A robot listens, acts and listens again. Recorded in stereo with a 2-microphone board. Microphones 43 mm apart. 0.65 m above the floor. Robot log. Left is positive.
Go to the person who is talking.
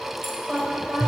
cmd yaw -30
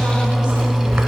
cmd idle
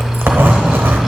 cmd idle
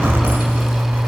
end: I heard a woman speaking, but can't make it out now. It was about 25° left or 145° right. I did not reach it.